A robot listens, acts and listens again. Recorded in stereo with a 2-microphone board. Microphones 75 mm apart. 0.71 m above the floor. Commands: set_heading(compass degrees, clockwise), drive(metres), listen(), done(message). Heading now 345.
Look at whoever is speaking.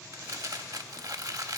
listen()
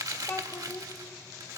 set_heading(320)
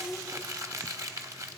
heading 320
done("Found it: a child speaking, straight ahead.")